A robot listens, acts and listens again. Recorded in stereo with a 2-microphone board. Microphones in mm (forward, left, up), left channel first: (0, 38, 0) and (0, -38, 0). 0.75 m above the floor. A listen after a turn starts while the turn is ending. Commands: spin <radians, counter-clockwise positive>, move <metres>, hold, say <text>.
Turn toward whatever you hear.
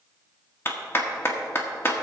spin 0.61
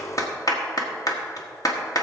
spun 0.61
spin 1.92
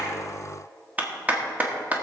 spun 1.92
spin -0.44
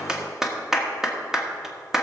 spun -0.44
say Facing the clap.